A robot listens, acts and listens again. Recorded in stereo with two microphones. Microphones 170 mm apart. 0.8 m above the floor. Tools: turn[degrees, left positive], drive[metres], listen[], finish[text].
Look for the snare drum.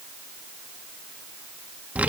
Action: listen[]
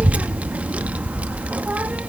Action: listen[]
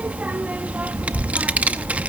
Action: finish[I can't make out a snare drum, only a child speaking.]